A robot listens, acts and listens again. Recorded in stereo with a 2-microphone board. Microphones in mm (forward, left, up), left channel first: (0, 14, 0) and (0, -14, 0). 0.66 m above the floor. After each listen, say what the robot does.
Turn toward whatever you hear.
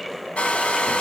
Turn 60° left.
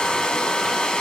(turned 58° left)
Turn 45° left.
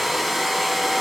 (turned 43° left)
Found it: a hair dryer, straight ahead, under 1 m away.